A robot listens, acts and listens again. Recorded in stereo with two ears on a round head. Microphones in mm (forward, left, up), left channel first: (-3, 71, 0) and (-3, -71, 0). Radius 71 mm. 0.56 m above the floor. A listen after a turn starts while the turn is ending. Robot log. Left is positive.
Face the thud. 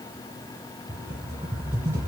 cmd idle
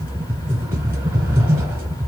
cmd idle
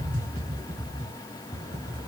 end: I can't make out a thud, only a rattle.